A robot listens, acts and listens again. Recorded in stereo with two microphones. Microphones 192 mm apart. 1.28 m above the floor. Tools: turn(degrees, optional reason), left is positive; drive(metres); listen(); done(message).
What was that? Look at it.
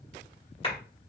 turn(degrees=30, reason="The clap: about 30° left or 150° left.")
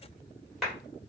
done("Found it: a clap, straight ahead, 1 to 2 m away.")